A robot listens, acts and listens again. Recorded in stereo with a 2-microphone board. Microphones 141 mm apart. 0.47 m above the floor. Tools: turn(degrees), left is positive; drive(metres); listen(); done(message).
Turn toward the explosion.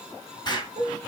turn(degrees=30)
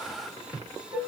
listen()
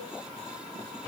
done("I heard an explosion, but can't make it out now. It was about straight ahead or 120° left.")